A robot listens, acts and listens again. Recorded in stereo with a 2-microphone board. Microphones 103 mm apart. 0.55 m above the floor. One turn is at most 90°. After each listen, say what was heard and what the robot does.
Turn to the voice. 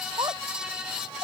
The child speaking: about 45° right or 135° right. Turn 45° right.
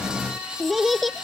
Facing the child speaking.